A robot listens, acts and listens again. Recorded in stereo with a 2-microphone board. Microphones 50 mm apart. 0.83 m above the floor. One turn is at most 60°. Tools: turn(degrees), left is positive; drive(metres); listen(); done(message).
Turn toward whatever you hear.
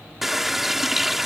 turn(degrees=-30)
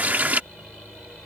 turn(degrees=-60)
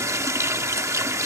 turn(degrees=-60)
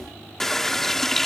done("Facing the running tap.")